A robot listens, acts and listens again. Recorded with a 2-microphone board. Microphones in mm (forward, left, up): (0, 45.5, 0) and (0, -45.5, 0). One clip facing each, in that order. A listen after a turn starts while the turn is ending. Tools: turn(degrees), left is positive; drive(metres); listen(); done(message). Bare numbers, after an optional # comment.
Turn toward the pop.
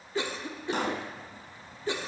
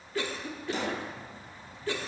# The pop: about 55° left or 125° left.
turn(55)
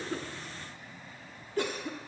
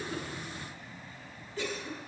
listen()
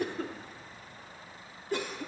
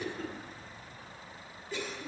done("I heard a pop, but can't make it out now. It was about straight ahead or 70° left.")